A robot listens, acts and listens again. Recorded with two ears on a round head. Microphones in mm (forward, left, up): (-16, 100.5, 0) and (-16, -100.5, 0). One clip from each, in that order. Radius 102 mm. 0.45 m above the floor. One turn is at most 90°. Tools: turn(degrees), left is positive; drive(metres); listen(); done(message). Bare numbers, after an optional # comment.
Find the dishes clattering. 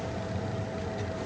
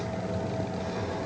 listen()
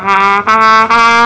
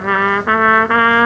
listen()
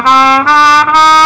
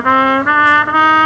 done("I can't make out dishes clattering to turn to.")